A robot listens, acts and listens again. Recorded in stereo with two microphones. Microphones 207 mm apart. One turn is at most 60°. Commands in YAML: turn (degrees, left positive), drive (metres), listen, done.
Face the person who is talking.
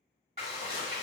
listen: true
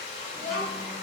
turn: -30
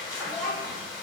turn: 10
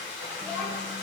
turn: -15
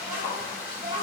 turn: -25
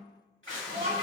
turn: -30
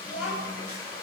done: "Found it: a child speaking, straight ahead, 1 to 2 m away."